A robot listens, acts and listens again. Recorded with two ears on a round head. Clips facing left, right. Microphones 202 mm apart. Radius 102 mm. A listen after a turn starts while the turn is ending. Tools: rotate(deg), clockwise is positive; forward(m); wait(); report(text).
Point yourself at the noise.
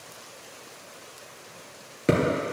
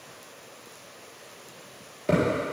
rotate(-90)
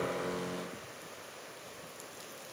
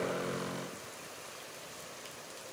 report("I heard a thud from this way, but can't make it out now.")